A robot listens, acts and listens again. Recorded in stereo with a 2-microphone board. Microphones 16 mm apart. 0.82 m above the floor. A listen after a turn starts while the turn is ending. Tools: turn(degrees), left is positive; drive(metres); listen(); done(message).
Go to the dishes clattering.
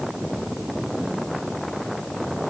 listen()
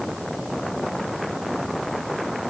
listen()
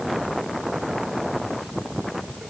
done("I can't make out dishes clattering to turn to.")